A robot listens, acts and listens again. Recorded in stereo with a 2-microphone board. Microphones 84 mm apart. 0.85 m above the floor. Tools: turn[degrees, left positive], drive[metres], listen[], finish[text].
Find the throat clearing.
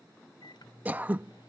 Thought: The throat clearing: about 20° right or 160° right.
Action: turn[-20]
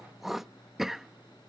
Action: finish[Found it: throat clearing, straight ahead.]